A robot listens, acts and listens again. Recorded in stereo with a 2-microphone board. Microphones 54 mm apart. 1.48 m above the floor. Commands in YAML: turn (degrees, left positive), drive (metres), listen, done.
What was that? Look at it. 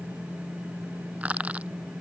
turn: -25
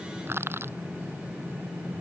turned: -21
turn: -135
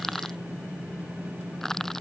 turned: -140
done: "Facing the crushing."